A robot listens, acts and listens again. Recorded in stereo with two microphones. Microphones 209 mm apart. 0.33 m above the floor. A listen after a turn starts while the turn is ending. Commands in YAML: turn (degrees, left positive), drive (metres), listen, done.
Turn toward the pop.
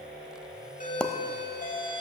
turn: 30
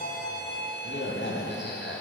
listen: true
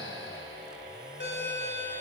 done: "I heard a pop, but can't make it out now. It was about 25° right or 145° left."